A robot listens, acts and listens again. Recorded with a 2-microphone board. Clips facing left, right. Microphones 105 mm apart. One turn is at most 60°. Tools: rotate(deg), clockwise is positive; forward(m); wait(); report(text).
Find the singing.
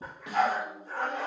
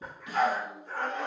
rotate(-30)
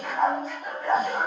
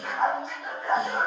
wait()
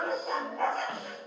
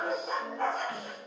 rotate(-60)
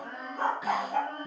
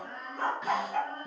rotate(-60)
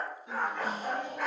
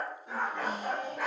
rotate(-20)
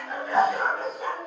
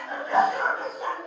report("Facing the singing.")